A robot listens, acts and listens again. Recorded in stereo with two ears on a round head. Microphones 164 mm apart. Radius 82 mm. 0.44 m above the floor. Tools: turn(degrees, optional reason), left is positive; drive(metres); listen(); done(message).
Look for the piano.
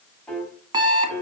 turn(degrees=30)
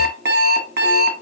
listen()
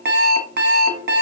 turn(degrees=-25, reason="So it is at 25° right.")
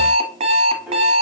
done("Found it: a piano, straight ahead, 2 to 4 m away.")